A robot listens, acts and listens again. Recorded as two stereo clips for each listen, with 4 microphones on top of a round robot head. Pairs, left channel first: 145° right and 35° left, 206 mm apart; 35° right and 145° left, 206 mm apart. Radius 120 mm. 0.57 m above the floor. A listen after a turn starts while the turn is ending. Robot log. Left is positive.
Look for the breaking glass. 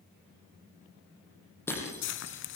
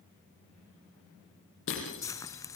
note: The breaking glass: 65° right.
cmd yaw -65
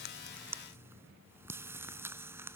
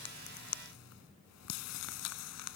end: Facing where the breaking glass came from. I can't hear it now.